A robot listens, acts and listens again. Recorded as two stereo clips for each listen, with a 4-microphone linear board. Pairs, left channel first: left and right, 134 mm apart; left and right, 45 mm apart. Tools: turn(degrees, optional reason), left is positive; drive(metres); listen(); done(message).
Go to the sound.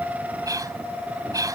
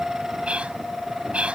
turn(degrees=-25, reason="The whispering: about 25° right or 155° right.")
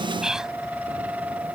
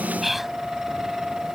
drive(metres=1.0)
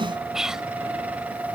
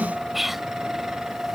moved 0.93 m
drive(metres=1.0)
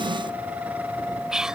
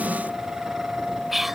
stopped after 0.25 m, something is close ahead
turn(degrees=-10, reason="The whispering is now 10° right.")
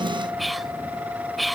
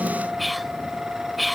done("I am next to the whispering.")